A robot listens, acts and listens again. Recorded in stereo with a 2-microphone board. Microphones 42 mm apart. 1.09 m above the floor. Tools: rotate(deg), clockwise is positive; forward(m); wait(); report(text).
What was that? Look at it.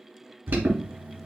rotate(60)
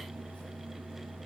wait()
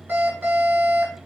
rotate(60)
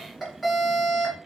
report("Found it: an alarm, straight ahead, 2 to 4 m away.")